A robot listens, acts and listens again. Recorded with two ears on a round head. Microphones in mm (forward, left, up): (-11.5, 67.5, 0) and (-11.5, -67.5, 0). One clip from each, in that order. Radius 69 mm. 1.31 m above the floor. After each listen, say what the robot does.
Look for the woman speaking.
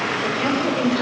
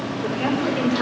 Turn 15° right.
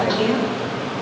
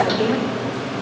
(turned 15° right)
Found it: a woman speaking, straight ahead.